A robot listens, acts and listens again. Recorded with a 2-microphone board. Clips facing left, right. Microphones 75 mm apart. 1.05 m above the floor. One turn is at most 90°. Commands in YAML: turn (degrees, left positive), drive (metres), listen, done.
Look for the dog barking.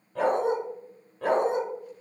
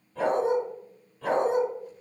turn: 60
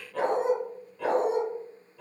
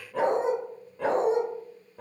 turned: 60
turn: -40
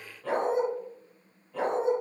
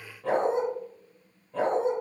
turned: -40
turn: -35
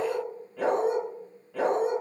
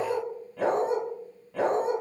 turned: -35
done: "Found it: a dog barking, straight ahead."